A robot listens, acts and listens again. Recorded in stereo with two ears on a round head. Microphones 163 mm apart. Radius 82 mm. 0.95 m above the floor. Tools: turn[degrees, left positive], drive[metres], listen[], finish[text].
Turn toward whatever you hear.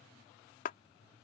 Thought: The clap: about 50° left or 130° left.
Action: turn[50]
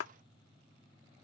Thought: So it is at 80° left.
Action: turn[80]
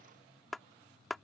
Action: finish[Facing the clap.]